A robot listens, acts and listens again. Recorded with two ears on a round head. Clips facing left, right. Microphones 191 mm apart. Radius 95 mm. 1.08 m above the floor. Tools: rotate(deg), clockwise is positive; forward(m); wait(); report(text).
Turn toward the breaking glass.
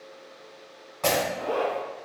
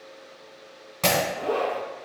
rotate(40)
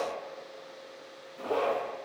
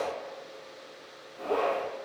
wait()
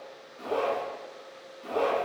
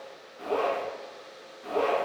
report("I heard breaking glass, but can't make it out now. It was about straight ahead or 100° right.")